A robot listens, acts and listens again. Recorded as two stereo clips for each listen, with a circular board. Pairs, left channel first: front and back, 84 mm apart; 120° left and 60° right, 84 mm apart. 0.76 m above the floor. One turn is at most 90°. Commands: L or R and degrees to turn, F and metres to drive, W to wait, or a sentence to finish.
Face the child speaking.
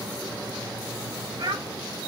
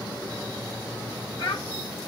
L90
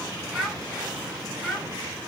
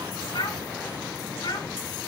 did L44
L85
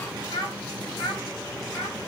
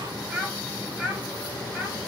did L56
L25
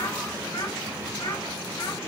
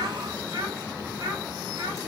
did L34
R10
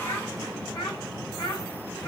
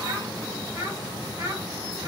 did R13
Found it: a child speaking, straight ahead.